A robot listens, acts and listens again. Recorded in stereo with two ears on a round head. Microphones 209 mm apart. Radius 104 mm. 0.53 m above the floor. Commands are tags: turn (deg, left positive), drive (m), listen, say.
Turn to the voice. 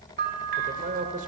<turn deg="-35"/>
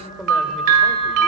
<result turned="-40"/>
<say>Found it: a man speaking, straight ahead, 2 to 4 m away.</say>